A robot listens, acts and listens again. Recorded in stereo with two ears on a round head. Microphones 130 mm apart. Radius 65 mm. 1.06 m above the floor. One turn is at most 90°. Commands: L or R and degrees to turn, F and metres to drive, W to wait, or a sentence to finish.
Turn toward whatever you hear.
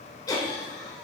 L25
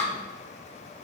L90
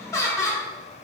L20
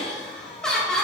Found it: laughter, straight ahead.